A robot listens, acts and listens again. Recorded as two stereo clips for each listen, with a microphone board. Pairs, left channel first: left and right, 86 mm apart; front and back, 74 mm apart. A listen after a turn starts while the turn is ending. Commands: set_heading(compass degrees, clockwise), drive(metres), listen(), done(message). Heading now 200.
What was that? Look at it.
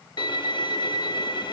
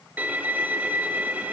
set_heading(90)
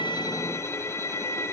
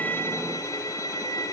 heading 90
set_heading(55)
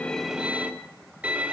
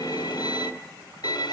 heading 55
set_heading(70)
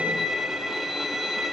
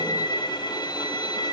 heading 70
done("Facing the violin.")